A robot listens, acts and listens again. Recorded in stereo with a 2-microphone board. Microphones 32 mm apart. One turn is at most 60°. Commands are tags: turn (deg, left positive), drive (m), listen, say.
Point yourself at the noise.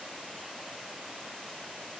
<listen/>
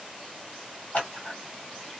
<turn deg="55"/>
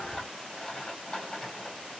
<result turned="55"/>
<turn deg="25"/>
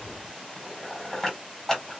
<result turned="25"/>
<turn deg="15"/>
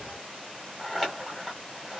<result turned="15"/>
<say>Found it: scissors, straight ahead.</say>